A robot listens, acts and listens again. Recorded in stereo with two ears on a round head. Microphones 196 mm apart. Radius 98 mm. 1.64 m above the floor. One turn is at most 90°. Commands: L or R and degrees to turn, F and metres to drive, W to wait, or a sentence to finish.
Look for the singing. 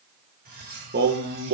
R55
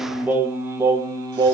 R20
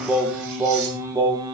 R15
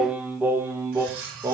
R15
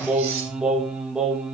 Facing the singing.